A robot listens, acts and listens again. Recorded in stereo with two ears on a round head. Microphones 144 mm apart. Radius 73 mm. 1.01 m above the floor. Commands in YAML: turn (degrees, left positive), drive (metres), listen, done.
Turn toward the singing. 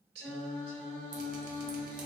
turn: -55
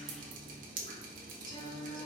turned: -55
turn: 30
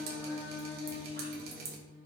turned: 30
turn: 45
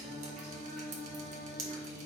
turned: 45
turn: 10
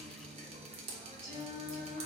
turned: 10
done: "Facing the singing, 1 to 2 m away."